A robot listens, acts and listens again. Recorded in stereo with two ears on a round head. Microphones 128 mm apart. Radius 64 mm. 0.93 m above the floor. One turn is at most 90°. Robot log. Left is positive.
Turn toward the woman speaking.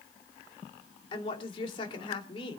note: The woman speaking: about 35° left or 145° left.
cmd yaw +35
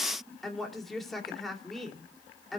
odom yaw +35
end: Found it: a woman speaking, straight ahead.